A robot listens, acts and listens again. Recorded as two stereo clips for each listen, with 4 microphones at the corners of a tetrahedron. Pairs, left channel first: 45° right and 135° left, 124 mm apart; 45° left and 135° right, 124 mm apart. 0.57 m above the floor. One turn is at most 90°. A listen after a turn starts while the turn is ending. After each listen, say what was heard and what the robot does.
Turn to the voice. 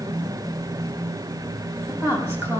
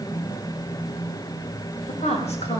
The woman speaking: 65° left. Turn 65° left.
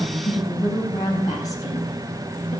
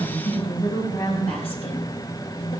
The woman speaking is now 10° left. Turn 10° left.
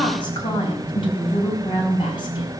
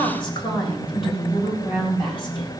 Facing the woman speaking.